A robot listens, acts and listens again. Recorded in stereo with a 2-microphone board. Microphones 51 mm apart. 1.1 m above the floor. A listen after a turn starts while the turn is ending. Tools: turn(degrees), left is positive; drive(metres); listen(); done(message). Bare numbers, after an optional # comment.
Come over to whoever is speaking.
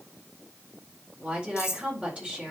# The woman speaking: about 30° right or 150° right.
turn(-30)
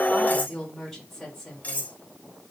drive(1.0)
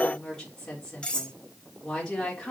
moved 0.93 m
# The woman speaking is now 15° left.
turn(15)
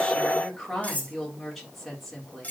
drive(1.0)
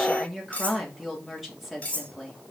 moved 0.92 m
drive(1.0)
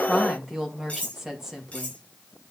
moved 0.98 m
# The woman speaking is now 10° right.
turn(-10)
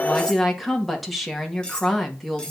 drive(1.0)
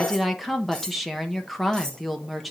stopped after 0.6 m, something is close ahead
done("I am next to the woman speaking.")